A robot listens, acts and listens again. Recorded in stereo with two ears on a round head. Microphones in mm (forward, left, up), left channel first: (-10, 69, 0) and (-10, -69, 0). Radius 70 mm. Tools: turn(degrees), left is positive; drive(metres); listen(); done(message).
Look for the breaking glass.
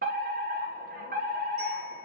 listen()
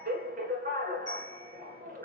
listen()
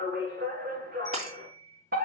turn(degrees=-50)
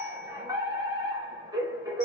listen()
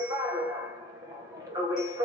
done("I heard breaking glass, but can't make it out now. It was about straight ahead or 80° right.")